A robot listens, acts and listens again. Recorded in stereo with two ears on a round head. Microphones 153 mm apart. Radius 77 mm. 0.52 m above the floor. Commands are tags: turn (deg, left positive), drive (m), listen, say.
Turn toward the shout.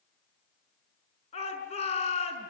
<turn deg="40"/>
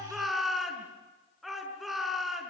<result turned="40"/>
<say>Facing the shout.</say>